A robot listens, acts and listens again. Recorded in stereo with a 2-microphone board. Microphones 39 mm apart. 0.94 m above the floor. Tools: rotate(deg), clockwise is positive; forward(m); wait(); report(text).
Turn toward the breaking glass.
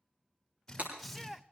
rotate(45)
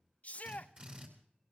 wait()
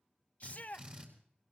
report("I heard breaking glass, but can't make it out now. It was about straight ahead or 90° right.")